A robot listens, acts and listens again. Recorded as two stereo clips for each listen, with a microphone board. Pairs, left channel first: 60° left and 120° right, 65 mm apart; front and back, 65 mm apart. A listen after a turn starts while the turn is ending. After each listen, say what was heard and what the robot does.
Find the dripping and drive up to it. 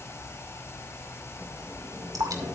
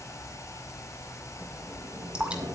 The dripping: 110° right. Turn 110° right.
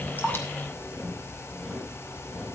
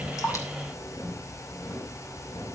Keep listening.
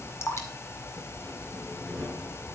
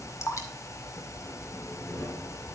The dripping is now 25° left. Turn 25° left.
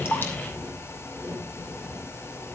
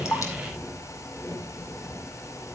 Keep listening.
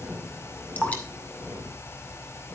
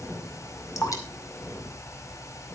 Drive 1.0 m forward.
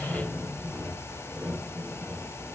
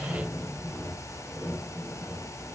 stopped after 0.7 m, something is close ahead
Keep listening.
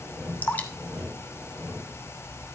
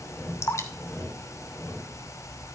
The dripping is now 10° left. Turn 10° left.
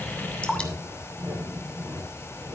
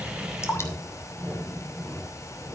Arrived at the dripping, straight ahead.